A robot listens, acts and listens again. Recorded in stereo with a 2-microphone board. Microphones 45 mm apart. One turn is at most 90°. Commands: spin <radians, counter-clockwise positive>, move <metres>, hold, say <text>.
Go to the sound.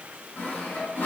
spin 0.96
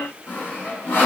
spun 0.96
spin 1.31
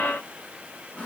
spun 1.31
hold
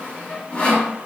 spin 0.52
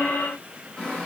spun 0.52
spin 0.35
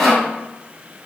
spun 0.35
spin 0.17
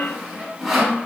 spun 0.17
move 1.0
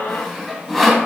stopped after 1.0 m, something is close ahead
say Arrived at the sawing, straight ahead.